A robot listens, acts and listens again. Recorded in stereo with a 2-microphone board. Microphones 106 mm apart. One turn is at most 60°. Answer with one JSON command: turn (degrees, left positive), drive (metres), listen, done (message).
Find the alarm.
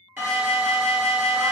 {"turn": -25}
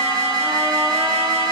{"turn": -60}
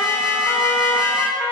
{"turn": -55}
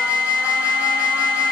{"turn": -20}
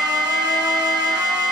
{"done": "Found it: an alarm, straight ahead."}